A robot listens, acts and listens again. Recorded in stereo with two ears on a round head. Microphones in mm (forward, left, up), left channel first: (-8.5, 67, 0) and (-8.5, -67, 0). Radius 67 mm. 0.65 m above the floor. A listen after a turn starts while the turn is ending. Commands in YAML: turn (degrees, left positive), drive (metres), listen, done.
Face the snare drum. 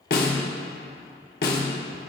turn: 70
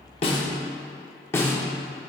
turn: 15
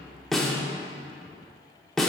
done: "Facing the snare drum, 1 to 2 m away."